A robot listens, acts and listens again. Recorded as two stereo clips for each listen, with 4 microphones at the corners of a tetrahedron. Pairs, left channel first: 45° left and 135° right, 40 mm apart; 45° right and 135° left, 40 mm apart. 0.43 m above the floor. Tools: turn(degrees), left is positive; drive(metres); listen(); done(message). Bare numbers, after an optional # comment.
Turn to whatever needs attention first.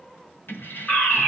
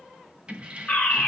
done("Facing the fire alarm.")